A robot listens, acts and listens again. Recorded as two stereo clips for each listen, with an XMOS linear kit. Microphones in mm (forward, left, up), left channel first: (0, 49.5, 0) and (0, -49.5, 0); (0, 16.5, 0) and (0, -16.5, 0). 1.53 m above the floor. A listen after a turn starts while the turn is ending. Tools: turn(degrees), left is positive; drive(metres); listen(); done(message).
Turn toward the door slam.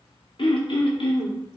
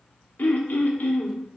listen()
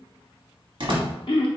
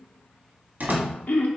turn(degrees=-60)
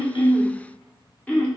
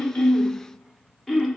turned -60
listen()
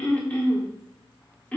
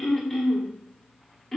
done("I heard a door slam, but can't make it out now. It was about straight ahead or 60° right.")